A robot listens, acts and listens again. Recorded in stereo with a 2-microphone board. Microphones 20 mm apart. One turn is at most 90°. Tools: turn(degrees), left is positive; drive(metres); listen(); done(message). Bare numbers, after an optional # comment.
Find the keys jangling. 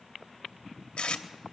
listen()
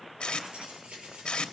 # The keys jangling: about 70° right or 110° right.
turn(-70)
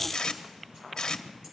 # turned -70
listen()
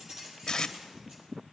# So it is at 45° right.
turn(-45)
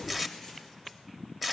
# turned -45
listen()
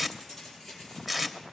done("Facing the keys jangling, over 4 m away.")